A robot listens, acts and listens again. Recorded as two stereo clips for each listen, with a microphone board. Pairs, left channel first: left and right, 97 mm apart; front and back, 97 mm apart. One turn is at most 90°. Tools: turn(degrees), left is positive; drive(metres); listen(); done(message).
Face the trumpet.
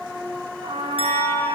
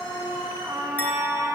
turn(degrees=-90)
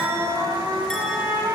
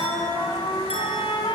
turn(degrees=-35)
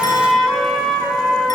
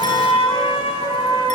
done("Facing the trumpet.")